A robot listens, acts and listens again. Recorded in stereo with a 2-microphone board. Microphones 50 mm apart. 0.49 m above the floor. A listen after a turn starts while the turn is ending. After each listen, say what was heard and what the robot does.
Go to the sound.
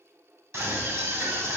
The scream: about 60° right or 120° right. Turn 60° right.
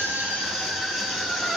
Drive 1.0 m forward.
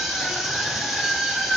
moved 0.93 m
The scream is now 15° right. Turn 15° right.
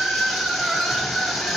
Drive 1.0 m forward.
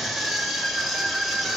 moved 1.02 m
Drive 1.0 m forward.
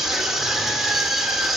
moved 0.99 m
The scream is now 10° right. Turn 10° right.
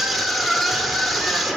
Drive 1.0 m forward.
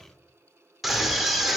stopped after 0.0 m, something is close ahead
Arrived at the scream, straight ahead.